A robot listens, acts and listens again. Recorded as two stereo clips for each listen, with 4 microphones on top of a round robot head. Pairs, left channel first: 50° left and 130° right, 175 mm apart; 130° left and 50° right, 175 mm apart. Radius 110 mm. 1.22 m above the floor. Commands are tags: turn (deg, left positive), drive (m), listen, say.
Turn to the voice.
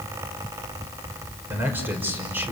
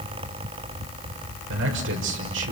<turn deg="-50"/>
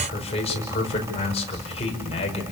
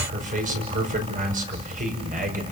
<say>Found it: a man speaking, straight ahead.</say>